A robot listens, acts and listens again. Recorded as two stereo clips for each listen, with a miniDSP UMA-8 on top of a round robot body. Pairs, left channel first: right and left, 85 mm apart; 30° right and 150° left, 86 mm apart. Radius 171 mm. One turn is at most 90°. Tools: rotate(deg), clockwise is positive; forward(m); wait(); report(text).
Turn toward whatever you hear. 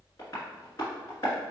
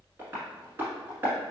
rotate(90)
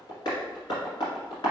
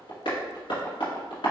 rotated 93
rotate(55)
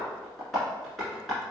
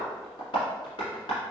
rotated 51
report("Facing the tapping, 1 to 2 m away.")